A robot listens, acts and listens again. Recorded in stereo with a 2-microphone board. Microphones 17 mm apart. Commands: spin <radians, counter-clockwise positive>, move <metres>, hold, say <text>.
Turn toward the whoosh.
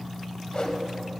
spin 1.05
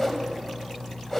spin 0.44
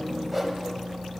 say Facing the whoosh, under 1 m away.